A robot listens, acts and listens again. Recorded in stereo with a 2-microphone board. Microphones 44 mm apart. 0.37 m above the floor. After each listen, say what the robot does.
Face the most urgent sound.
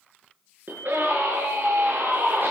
Turn 45° right.
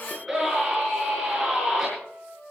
Facing the scream.